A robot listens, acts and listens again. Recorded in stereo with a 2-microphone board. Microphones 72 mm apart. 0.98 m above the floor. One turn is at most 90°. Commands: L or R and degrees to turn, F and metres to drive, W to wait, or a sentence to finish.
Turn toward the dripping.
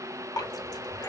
L70
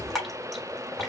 Found it: dripping, straight ahead, 1 to 2 m away.